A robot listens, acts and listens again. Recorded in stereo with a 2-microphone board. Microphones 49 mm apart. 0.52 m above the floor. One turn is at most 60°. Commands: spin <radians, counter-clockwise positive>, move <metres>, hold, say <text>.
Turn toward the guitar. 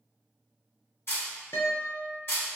spin 1.05
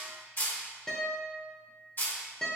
spin 0.26
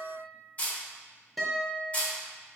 say Found it: a guitar, straight ahead, under 1 m away.